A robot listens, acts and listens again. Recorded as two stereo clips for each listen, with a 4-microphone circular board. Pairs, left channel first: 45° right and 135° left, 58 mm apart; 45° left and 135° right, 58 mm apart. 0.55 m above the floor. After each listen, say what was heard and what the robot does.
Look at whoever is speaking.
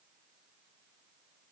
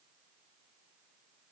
Keep listening.
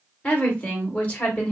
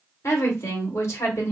The woman speaking: 15° left. Turn 15° left.
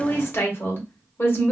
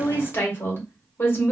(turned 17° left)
Found it: a woman speaking, straight ahead, 1 to 2 m away.